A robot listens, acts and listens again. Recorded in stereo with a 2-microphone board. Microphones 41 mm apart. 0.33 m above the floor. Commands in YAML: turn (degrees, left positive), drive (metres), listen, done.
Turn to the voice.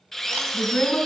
turn: 50
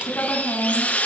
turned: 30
turn: 95
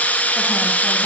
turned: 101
listen: true
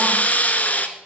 listen: true
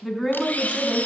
done: "Found it: a woman speaking, straight ahead, 2 to 4 m away."